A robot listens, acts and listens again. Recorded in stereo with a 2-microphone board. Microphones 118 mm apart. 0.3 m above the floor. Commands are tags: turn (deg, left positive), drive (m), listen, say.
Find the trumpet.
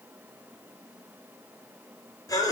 <listen/>
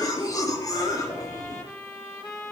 <turn deg="20"/>
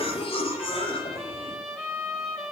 <say>Facing the trumpet.</say>